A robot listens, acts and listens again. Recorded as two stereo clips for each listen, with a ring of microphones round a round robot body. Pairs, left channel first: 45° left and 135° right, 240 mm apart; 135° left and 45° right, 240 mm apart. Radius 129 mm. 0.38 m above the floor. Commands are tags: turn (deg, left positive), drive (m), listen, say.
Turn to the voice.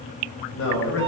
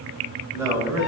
<turn deg="30"/>
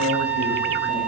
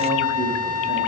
<listen/>
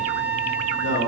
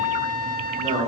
<turn deg="10"/>
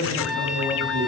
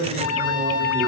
<say>Facing the man speaking, 1 to 2 m away.</say>